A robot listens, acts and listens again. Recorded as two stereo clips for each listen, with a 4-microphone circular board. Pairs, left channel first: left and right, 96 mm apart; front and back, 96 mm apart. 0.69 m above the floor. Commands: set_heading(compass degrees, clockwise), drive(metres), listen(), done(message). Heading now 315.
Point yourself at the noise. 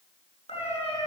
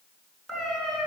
set_heading(230)
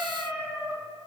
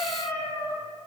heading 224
set_heading(239)
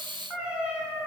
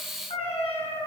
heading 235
set_heading(250)
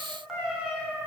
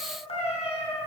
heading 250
set_heading(260)
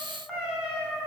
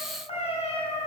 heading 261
set_heading(276)
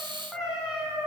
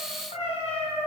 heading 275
set_heading(285)
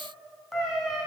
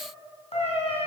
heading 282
done("Facing the cat meowing.")